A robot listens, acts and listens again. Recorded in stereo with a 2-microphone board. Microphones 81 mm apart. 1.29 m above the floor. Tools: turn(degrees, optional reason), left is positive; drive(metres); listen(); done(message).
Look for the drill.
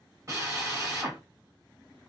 turn(degrees=-35, reason="The drill: about 35° right or 145° right.")
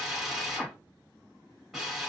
done("Facing the drill, 1 to 2 m away.")